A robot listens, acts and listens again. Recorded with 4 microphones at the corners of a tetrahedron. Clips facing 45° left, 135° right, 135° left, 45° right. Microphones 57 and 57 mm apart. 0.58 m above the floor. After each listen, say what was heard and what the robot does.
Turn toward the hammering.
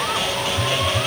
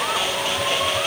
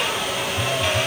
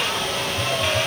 Keep listening.
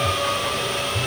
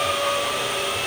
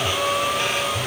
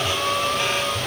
Keep listening.
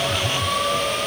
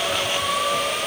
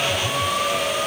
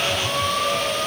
I can't make out hammering to turn to.